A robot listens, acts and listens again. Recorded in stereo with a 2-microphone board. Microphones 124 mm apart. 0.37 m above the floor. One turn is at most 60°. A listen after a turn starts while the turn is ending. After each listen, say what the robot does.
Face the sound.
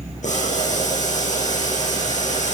Turn 60° left.
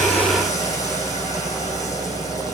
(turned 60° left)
Turn 30° left.
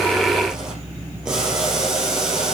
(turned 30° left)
Facing the boiling, over 4 m away.